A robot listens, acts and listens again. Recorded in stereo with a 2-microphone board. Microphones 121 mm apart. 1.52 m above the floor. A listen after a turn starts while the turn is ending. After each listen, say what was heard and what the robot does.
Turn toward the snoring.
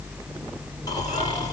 Keep listening.
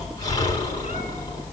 The snoring: about 30° left or 150° left. Turn 30° left.
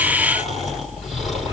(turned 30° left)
Found it: snoring, straight ahead, over 4 m away.